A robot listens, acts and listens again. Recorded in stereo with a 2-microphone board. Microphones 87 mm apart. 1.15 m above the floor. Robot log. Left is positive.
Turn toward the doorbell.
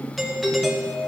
cmd yaw +30
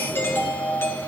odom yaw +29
note: So it is at 150° left.
cmd yaw +150
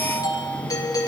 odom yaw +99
note: The doorbell is now 50° left.
cmd yaw +50
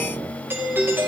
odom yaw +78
note: The doorbell is now 25° right.
cmd yaw -25
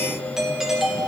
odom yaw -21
end: Facing the doorbell, 1 to 2 m away.